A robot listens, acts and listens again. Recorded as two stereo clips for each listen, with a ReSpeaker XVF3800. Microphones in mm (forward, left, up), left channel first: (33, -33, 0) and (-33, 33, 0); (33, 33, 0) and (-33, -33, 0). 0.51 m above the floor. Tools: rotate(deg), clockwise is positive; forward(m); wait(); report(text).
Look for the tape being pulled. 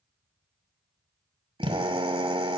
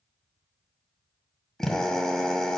wait()
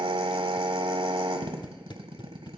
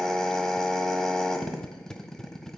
rotate(35)
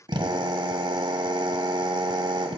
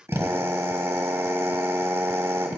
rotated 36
wait()
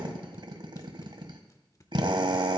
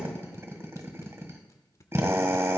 report("Found it: tape being pulled, straight ahead, under 1 m away.")